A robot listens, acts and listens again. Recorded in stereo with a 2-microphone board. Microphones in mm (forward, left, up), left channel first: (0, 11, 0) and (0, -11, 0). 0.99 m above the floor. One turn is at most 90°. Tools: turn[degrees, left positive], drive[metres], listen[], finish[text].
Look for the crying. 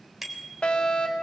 Action: listen[]
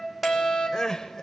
Thought: The crying: about 30° left or 150° left.
Action: turn[30]
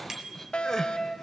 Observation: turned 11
Thought: So it is at 20° left.
Action: turn[20]
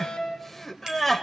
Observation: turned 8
Thought: The crying is now 10° left.
Action: turn[10]
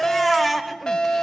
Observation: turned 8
Action: finish[Found it: crying, straight ahead, 1 to 2 m away.]